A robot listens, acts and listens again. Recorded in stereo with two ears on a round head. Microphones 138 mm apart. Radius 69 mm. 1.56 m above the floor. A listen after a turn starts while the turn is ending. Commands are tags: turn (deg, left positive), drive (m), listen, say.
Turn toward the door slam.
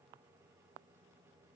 <listen/>
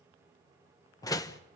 <turn deg="25"/>
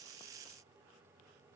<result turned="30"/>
<listen/>
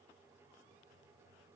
<say>I heard a door slam, but can't make it out now. It was about 5° right or 125° left.</say>